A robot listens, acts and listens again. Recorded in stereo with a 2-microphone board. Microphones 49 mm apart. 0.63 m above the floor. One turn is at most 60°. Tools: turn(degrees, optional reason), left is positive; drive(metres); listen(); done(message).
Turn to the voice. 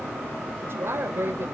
turn(degrees=-55, reason="The woman speaking: about 55° right or 125° right.")
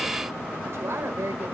turn(degrees=-60, reason="So it is at 65° right.")
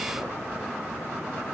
listen()
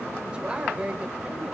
turn(degrees=-20, reason="The woman speaking is now 20° right.")
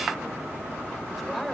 listen()
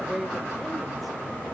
done("Found it: a woman speaking, straight ahead.")